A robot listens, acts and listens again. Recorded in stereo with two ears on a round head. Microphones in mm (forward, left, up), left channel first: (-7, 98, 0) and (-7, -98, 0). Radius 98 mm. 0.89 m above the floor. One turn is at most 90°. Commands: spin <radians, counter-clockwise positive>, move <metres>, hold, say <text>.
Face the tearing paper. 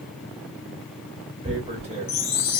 spin -0.52
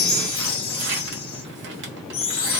spin -1.57
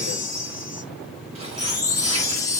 spin -0.52
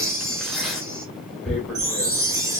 say Found it: tearing paper, straight ahead, 1 to 2 m away.